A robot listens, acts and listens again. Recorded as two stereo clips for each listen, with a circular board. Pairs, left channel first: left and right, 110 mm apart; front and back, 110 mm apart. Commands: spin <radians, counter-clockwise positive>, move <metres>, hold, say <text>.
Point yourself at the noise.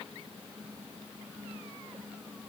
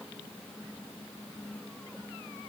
hold
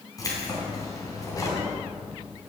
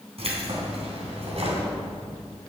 spin 2.62
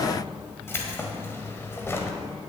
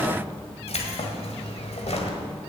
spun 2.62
spin 0.35
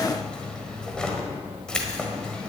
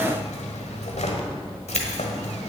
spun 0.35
say Found it: keys jangling, straight ahead, 1 to 2 m away.